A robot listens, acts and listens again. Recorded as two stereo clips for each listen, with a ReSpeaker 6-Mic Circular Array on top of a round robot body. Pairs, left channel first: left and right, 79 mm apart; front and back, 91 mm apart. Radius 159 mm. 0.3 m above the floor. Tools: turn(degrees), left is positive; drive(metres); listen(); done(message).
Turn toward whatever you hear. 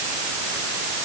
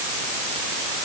listen()
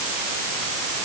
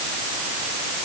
listen()
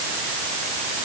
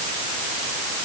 done("I can't make out anything to turn to.")